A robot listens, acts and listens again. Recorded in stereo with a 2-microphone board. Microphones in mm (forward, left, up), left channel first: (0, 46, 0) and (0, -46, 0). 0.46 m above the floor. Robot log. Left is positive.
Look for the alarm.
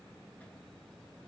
cmd idle
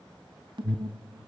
note: The alarm: about 60° right or 120° right.
cmd yaw -60
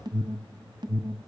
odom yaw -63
note: So it is at 55° right.
cmd yaw -55
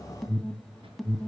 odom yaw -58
end: Facing the alarm, 2 to 4 m away.